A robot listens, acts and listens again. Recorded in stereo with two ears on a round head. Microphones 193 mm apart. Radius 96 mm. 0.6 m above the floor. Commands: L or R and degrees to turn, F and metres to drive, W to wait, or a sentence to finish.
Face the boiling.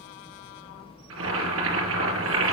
R90
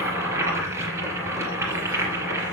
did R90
R15
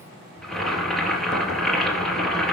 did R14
Facing the boiling.